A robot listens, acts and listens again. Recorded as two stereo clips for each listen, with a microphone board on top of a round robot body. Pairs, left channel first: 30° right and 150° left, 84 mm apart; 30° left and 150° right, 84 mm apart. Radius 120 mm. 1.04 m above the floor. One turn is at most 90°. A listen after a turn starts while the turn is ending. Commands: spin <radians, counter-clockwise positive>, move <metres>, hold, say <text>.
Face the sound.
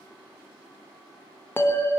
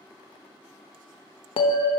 spin 0.61
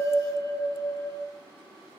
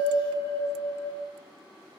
spin 0.26
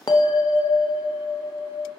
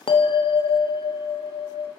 say Facing the bell, under 1 m away.